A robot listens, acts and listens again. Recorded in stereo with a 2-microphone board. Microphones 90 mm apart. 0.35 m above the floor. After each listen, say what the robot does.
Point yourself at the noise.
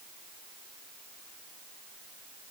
Keep listening.
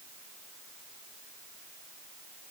Keep listening.
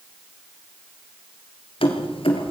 Turn 90° left.
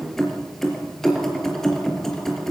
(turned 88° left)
Found it: keys jangling, straight ahead, over 4 m away.